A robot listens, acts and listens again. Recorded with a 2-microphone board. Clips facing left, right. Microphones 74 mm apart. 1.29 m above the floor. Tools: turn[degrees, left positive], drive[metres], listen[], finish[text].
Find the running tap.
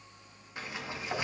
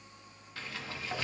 Action: listen[]
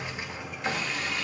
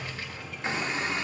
Thought: The running tap: about 25° right or 155° right.
Action: turn[-25]
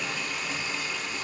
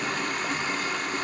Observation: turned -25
Thought: So it is at 125° right.
Action: turn[-125]
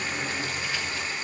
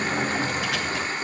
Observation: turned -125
Thought: The running tap is now 45° right.
Action: turn[-45]
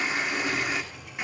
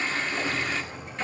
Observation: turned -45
Thought: The running tap is now 15° left.
Action: turn[15]
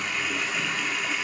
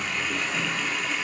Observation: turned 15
Action: finish[Found it: a running tap, straight ahead.]